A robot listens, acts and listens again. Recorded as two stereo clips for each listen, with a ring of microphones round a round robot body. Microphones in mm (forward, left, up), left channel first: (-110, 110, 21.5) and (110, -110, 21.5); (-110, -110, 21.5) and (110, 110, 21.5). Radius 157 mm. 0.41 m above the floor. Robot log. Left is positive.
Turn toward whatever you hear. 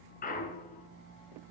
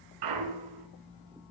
note: The clunk: 70° left.
cmd yaw +70
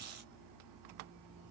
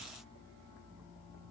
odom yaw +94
note: Nothing new. It was at 25° right.
cmd yaw -25
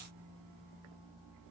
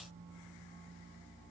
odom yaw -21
end: Facing where the clunk came from. I can't hear it now.